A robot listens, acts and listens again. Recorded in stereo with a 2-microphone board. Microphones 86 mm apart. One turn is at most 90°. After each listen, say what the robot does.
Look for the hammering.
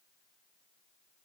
Keep listening.
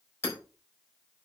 Turn 30° left.
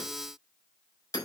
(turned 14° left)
Turn 90° left.
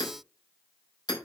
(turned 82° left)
Turn 50° left.
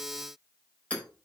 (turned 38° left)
Turn 15° left.
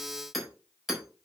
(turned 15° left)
Found it: hammering, straight ahead.